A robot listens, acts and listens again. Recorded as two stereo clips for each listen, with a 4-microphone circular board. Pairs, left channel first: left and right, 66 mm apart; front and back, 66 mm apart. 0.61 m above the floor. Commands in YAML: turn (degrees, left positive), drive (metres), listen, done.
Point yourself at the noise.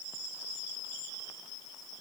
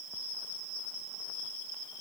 listen: true
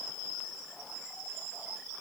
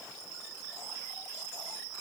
listen: true
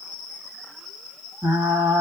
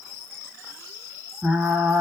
turn: -115
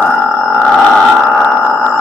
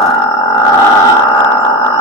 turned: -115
done: "Facing the frying, 1 to 2 m away."